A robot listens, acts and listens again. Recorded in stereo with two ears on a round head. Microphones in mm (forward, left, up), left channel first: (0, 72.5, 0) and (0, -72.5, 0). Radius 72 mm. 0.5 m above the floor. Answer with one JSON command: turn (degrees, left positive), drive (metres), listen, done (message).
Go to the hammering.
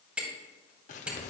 {"turn": -30}
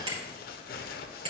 {"turn": -145}
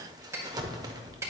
{"turn": -20}
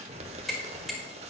{"drive": 1.0}
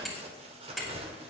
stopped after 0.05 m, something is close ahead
{"done": "Something is in my way. I am facing the hammering but have not reached it."}